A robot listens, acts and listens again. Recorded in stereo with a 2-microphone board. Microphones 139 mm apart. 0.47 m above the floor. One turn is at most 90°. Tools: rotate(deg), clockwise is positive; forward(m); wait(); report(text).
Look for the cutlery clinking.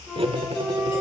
rotate(45)
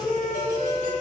wait()
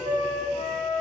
wait()
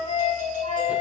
report("I heard cutlery clinking, but can't make it out now. It was about straight ahead or 90° right.")